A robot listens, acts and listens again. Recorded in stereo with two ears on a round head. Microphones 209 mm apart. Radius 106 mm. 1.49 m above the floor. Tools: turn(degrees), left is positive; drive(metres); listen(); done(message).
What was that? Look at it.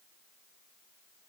listen()
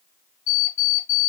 turn(degrees=30)
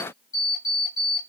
done("Facing the alarm clock, 2 to 4 m away.")